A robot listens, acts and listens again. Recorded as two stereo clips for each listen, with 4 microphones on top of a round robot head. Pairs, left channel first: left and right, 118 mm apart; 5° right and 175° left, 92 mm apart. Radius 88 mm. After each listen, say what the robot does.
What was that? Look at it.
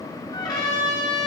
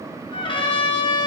Turn 25° left.
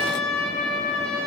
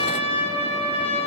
Turn 10° left.
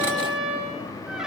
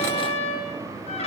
Found it: a trumpet, straight ahead.